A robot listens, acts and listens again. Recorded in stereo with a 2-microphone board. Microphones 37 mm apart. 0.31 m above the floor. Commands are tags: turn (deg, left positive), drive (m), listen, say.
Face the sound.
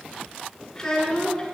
<turn deg="20"/>
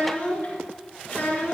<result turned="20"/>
<turn deg="130"/>
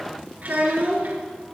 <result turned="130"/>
<turn deg="-50"/>
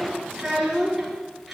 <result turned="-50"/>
<say>Facing the child speaking, 2 to 4 m away.</say>